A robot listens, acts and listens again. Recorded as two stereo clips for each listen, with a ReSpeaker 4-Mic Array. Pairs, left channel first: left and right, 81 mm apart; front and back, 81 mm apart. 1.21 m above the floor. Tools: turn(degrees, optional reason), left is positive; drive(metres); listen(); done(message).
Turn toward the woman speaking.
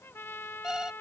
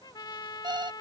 listen()
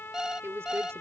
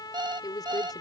turn(degrees=-35, reason="The woman speaking: 35° right.")
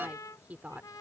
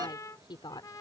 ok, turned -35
turn(degrees=-20, reason="The woman speaking is now 20° right.")
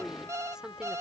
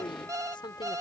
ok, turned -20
turn(degrees=-10, reason="The woman speaking is now 10° right.")
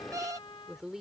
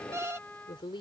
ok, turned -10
turn(degrees=-10, reason="The woman speaking is now 10° right.")
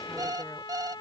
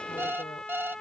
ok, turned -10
listen()
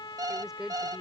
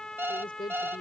done("Facing the woman speaking.")